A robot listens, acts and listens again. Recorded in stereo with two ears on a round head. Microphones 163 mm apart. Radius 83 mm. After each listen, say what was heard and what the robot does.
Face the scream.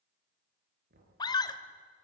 The scream: about 25° left or 155° left. Turn 25° left.
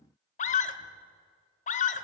So it is at 130° left. Turn 130° left.
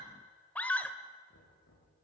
The scream is now 10° left. Turn 10° left.
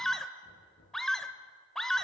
Found it: a scream, straight ahead, 1 to 2 m away.